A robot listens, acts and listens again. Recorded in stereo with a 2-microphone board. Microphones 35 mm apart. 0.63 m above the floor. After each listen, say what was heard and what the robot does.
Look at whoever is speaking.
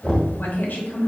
The woman speaking: about 65° left or 115° left. Turn 65° left.
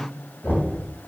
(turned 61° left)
Keep listening.
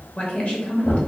So it is at 45° left. Turn 45° left.
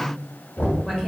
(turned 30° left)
The woman speaking is now 15° left. Turn 15° left.
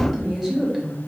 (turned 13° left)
Found it: a woman speaking, straight ahead, 2 to 4 m away.